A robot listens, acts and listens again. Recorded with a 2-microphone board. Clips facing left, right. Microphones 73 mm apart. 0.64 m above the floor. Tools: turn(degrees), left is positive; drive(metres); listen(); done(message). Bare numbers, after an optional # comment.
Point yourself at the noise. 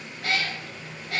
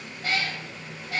# The cat meowing: about 70° left or 110° left.
turn(70)
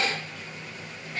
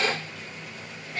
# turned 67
done("Found it: a cat meowing, straight ahead.")